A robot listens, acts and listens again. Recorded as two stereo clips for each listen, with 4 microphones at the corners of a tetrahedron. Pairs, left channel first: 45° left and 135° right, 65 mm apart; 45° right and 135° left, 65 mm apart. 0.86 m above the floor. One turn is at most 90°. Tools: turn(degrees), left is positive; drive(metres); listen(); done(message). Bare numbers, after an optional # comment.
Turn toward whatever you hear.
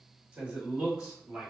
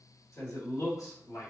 # The man speaking: 55° right.
turn(-55)
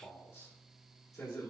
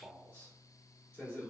# The man speaking is now 20° left.
turn(20)
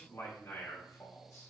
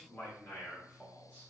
# The man speaking is now 10° left.
turn(10)
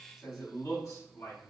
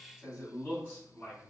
# The man speaking is now 10° left.
turn(10)
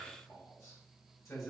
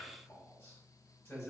done("Facing the man speaking, 2 to 4 m away.")